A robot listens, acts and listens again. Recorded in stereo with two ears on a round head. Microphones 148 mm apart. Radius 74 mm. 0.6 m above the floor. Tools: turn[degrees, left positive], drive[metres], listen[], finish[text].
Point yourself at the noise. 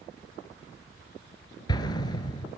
Thought: The explosion: about 25° left or 155° left.
Action: turn[25]
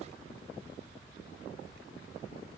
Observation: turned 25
Action: listen[]
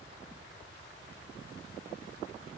Action: finish[I heard an explosion, but can't make it out now. It was about straight ahead or 130° left.]